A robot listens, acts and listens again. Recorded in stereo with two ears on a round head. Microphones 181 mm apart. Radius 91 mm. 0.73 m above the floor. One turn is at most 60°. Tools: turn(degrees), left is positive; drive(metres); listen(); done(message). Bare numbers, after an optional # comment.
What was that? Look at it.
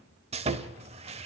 # The sawing: about 30° right or 150° right.
turn(-30)
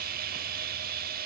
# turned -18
# So it is at 135° right.
turn(-60)
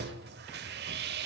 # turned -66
# The sawing is now 60° right.
turn(-60)
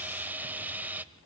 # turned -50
# The sawing is now 10° right.
turn(-10)
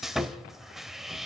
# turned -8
done("Facing the sawing.")